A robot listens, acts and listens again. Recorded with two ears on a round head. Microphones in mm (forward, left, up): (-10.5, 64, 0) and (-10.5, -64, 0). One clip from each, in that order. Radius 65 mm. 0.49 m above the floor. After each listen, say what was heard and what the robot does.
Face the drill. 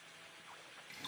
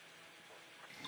Keep listening.
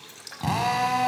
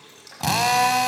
Turn 90° right.
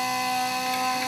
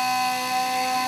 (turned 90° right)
Facing the drill.